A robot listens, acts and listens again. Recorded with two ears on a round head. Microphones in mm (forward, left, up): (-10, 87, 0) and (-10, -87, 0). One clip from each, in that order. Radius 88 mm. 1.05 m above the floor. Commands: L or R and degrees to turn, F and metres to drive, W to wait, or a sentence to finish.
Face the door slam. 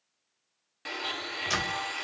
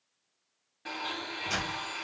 L75
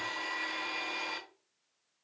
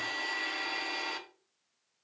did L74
W
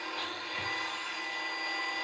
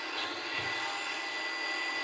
I heard a door slam, but can't make it out now. It was about straight ahead or 30° left.